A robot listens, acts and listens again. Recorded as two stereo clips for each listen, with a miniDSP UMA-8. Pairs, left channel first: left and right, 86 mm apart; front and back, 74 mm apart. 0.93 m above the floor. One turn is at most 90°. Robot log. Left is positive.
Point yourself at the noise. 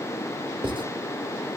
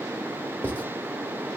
note: The writing: 70° right.
cmd yaw -70
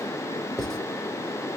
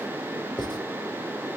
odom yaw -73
end: Facing the writing.